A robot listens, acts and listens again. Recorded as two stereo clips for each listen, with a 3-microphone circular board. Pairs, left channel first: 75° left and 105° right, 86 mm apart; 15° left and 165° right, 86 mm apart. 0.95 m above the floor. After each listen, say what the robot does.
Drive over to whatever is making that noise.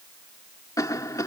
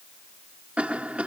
Turn 120° left.
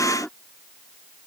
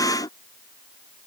Drive 1.0 m forward.
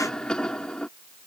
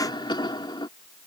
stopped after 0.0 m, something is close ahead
Blocked. The cough is further on, straight ahead.